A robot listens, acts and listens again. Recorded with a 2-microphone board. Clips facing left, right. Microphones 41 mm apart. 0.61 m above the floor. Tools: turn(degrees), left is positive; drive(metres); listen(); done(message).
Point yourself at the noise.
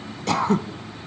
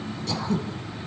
turn(degrees=60)
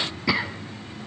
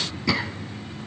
turn(degrees=15)
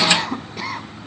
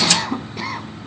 done("Facing the throat clearing, under 1 m away.")